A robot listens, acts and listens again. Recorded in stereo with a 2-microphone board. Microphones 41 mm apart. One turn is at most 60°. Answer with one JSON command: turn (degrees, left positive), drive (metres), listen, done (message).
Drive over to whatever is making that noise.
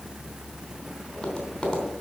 {"turn": 15}
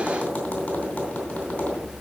{"turn": 60}
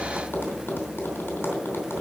{"turn": 60}
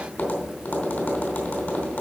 {"turn": 55}
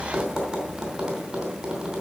{"turn": -15}
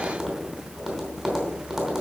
{"drive": 1.0}
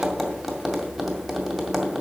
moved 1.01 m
{"drive": 1.0}
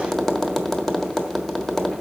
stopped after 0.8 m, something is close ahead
{"turn": 10}
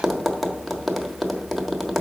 {"done": "Arrived at the tapping, straight ahead."}